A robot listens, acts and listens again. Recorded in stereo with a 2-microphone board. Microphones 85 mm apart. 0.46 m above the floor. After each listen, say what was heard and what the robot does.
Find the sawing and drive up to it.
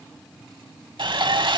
The sawing: about 70° right or 110° right. Turn 70° right.
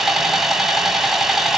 Drive 1.0 m forward.
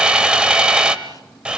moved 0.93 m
The sawing is now 10° right. Turn 10° right.
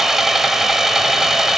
Drive 1.0 m forward.
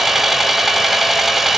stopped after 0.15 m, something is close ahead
Arrived at the sawing, straight ahead.